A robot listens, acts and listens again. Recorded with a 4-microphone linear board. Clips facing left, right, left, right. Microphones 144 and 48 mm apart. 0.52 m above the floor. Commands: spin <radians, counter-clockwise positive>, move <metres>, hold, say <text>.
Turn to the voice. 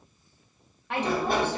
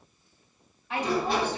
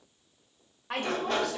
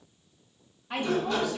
spin 1.13
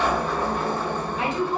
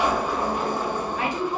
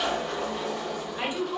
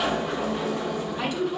spin 0.44
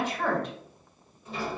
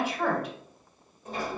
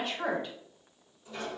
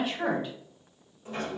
spin -0.17
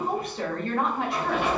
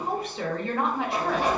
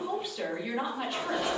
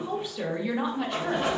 say Facing the woman speaking.